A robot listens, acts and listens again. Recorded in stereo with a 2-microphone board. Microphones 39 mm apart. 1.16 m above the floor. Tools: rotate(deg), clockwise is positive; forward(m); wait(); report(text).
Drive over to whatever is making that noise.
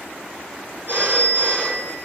rotate(50)
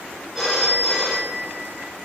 forward(1.0)
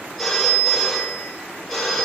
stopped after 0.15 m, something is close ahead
report("Blocked. The phone ringing is further on, straight ahead.")